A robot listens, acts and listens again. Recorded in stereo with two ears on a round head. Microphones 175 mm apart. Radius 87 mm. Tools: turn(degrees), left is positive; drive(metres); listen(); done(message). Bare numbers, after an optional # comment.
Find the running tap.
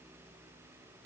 listen()
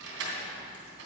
listen()
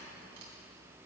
done("I can't make out a running tap to turn to.")